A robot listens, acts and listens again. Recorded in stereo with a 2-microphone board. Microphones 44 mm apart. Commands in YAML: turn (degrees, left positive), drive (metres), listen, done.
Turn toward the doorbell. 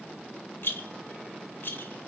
listen: true
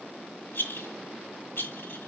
listen: true
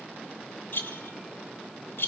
done: "I can't make out a doorbell to turn to."